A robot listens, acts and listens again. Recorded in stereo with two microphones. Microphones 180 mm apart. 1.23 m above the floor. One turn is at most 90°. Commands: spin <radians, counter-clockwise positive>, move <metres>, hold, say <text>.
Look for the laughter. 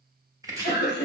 spin 1.13
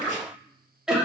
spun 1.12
say Facing the laughter, 1 to 2 m away.